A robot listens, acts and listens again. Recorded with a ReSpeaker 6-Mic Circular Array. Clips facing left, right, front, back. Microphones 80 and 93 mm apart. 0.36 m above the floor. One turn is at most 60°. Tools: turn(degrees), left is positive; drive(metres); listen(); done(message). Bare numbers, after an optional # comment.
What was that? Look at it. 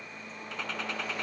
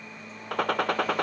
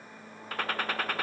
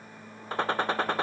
# The gunshot: 115° right.
turn(-60)
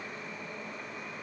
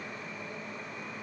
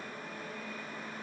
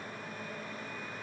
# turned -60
# Nothing new. It was at 55° right.
turn(-55)
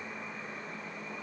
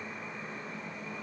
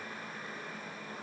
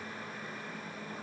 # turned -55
done("I heard a gunshot from this way, but can't make it out now.")